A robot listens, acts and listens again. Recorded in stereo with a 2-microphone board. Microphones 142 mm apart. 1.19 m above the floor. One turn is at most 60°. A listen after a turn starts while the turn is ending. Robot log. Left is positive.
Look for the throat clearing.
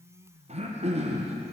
note: The throat clearing: about 50° right or 130° right.
cmd yaw -50
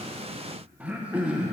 note: So it is at 10° right.
cmd yaw -10
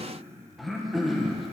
end: Facing the throat clearing.